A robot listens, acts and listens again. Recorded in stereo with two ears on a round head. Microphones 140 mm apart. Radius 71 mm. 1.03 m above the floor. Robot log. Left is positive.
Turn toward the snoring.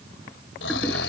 cmd yaw +90
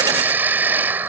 note: So it is at 10° right.
cmd yaw -10
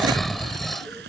end: Facing the snoring.